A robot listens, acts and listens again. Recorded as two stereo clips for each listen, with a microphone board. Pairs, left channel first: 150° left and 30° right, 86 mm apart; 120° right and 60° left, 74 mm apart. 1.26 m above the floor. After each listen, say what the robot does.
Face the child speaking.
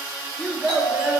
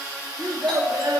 Turn 40° left.
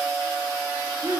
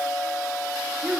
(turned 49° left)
Turn 10° right.
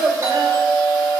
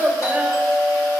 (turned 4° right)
Found it: a child speaking, straight ahead, 1 to 2 m away.